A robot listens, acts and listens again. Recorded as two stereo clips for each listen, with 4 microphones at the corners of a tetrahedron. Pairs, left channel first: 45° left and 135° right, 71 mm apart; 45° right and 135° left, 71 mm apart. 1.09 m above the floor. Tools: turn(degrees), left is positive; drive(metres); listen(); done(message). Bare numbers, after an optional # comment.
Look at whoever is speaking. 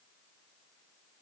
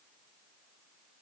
listen()
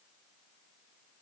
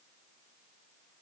listen()
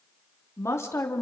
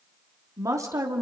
# The woman speaking: 100° left.
turn(100)
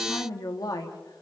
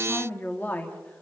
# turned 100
# The woman speaking is now 20° left.
turn(20)
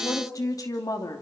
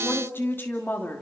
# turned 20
# The woman speaking is now 20° left.
turn(20)
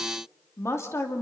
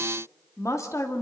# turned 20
done("Found it: a woman speaking, straight ahead.")